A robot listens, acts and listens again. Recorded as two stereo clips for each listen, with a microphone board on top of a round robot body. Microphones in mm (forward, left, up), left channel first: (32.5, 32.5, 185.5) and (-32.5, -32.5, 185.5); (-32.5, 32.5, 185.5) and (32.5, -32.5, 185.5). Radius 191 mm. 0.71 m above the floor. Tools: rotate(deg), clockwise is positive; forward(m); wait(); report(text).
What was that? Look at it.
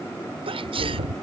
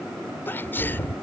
rotate(155)
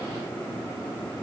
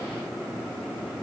report("I heard a sneeze from this way, but can't make it out now.")